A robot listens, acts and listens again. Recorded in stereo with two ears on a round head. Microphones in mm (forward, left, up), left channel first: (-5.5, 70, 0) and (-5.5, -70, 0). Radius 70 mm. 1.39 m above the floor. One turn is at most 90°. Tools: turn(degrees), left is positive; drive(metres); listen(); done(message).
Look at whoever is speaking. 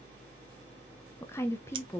turn(degrees=15)
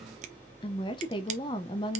turn(degrees=90)
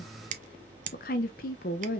turn(degrees=65)
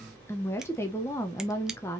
turn(degrees=20)
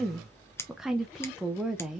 done("Found it: a woman speaking, straight ahead.")